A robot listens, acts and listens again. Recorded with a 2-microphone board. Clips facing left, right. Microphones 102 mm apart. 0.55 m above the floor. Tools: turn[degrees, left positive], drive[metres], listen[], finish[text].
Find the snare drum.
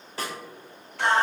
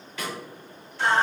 Thought: The snare drum: about 35° left or 145° left.
Action: turn[35]
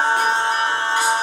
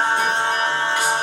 Action: listen[]
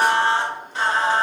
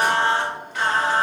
Action: listen[]
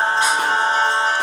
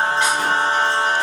Action: finish[I heard a snare drum, but can't make it out now. It was about straight ahead or 110° left.]